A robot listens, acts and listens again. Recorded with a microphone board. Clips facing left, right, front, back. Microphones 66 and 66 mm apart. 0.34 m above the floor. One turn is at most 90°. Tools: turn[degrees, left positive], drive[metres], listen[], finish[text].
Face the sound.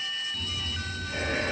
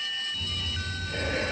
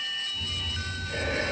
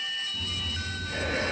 Thought: The breathing: 150° left.
Action: turn[90]
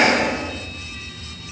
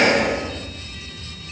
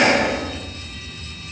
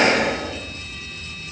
Thought: The breathing is now 75° left.
Action: turn[75]
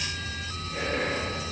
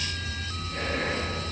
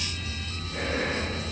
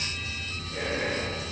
Action: finish[Facing the breathing.]